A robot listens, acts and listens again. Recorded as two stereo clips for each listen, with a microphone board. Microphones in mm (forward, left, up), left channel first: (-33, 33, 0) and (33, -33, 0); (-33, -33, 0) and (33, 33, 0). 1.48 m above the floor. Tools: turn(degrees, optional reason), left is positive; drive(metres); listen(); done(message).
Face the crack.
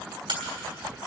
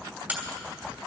turn(degrees=-25, reason="The crack: 25° right.")
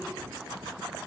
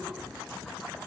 done("Facing where the crack came from. I can't hear it now.")